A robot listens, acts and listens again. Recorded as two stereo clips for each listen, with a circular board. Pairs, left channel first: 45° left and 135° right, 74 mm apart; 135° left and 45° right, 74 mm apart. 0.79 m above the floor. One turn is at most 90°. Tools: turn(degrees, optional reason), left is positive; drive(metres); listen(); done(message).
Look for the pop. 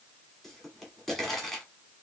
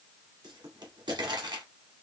turn(degrees=-40, reason="The pop: 40° right.")
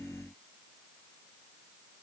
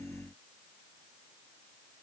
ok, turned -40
done("I heard a pop from this way, but can't make it out now.")